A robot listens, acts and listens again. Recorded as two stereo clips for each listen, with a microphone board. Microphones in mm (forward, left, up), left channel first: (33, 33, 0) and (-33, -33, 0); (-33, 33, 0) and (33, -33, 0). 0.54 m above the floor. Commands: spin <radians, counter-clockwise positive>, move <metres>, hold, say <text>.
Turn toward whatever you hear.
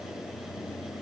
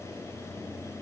hold
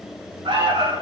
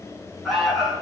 spin -2.36
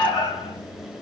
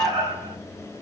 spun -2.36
say Found it: an alarm, straight ahead.